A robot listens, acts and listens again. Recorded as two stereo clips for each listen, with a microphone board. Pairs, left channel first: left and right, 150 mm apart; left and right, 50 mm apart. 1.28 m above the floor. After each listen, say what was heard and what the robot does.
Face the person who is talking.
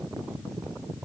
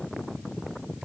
Keep listening.
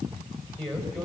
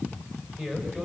The man speaking: about 25° right or 155° right. Turn 25° right.
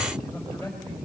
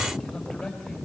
Found it: a man speaking, straight ahead.